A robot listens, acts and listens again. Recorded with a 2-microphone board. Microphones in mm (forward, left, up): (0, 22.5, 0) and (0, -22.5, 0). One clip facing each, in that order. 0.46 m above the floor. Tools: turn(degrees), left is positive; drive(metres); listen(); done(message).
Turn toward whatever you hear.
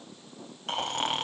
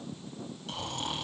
turn(degrees=55)
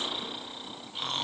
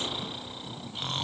done("Facing the snoring, 1 to 2 m away.")